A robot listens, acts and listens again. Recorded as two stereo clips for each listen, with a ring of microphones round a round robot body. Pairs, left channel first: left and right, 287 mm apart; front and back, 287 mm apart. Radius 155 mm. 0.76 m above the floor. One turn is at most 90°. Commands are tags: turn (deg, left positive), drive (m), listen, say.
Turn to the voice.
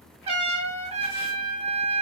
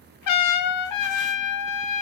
<listen/>
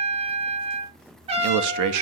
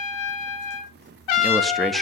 <turn deg="-90"/>
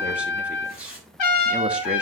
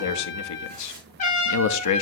<say>Facing the man speaking.</say>